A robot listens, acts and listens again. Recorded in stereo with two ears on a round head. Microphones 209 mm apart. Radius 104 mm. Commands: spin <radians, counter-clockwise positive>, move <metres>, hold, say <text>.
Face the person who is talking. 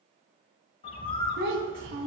spin -0.96
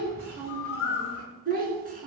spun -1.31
spin -0.70
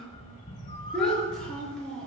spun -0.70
say Facing the child speaking, over 4 m away.